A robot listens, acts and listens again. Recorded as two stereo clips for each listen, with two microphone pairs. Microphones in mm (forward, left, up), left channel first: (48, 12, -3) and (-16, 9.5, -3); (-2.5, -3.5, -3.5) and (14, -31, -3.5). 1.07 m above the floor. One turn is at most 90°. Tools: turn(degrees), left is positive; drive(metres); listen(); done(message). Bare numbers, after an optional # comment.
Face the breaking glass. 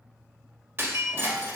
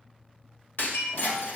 # The breaking glass: 130° left.
turn(90)
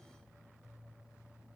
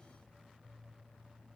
# Nothing new. It was at 40° left.
turn(40)
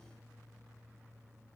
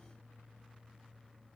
done("Facing where the breaking glass came from. I can't hear it now.")